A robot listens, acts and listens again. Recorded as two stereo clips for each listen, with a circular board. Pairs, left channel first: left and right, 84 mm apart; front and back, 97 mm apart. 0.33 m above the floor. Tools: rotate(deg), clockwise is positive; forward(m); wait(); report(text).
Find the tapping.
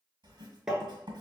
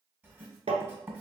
rotate(170)
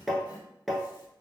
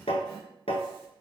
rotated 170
report("Facing the tapping.")